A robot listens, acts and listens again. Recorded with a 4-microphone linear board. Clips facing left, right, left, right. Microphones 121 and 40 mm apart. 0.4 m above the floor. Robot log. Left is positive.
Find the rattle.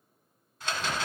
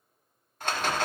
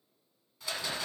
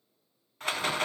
note: The rattle: about 55° right or 125° right.
cmd yaw -55
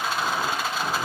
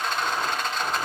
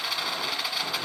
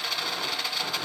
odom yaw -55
end: Facing the rattle, 1 to 2 m away.